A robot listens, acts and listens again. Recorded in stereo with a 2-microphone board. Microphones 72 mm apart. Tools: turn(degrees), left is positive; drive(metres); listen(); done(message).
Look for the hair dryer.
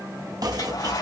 turn(degrees=70)
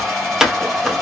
done("Facing the hair dryer, 2 to 4 m away.")